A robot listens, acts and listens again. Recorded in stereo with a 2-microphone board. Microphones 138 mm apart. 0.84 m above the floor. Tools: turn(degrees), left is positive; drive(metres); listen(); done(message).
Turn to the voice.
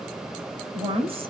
turn(degrees=-45)
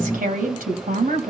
turn(degrees=-95)
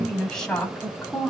done("Found it: a woman speaking, straight ahead, over 4 m away.")